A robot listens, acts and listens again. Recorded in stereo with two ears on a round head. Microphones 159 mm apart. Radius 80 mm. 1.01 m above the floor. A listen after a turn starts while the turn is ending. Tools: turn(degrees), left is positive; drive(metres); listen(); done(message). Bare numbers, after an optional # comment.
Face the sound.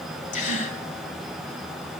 # The gasp: about 45° left or 135° left.
turn(45)
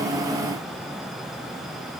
listen()
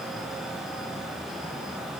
done("I heard a gasp, but can't make it out now. It was about straight ahead or 90° left.")